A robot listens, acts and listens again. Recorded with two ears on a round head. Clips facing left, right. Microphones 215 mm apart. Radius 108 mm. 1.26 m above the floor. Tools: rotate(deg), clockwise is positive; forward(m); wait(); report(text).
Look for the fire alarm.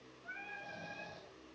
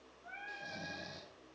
wait()
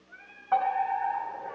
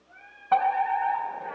rotate(50)
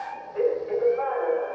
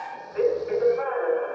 report("Facing the fire alarm, 2 to 4 m away.")